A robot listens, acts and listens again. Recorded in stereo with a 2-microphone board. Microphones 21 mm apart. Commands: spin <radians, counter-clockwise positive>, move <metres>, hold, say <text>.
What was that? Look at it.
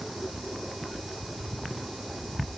hold
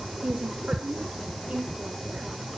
spin -1.13
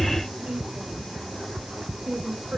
spin -1.13
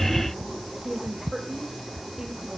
say Found it: a woman speaking, straight ahead, 2 to 4 m away.